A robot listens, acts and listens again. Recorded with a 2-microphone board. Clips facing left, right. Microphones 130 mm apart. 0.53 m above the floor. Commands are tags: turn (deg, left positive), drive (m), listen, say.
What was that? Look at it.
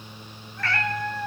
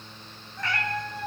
<turn deg="-15"/>
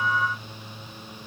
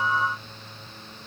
<listen/>
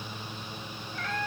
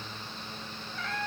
<say>Found it: a cat meowing, straight ahead, 1 to 2 m away.</say>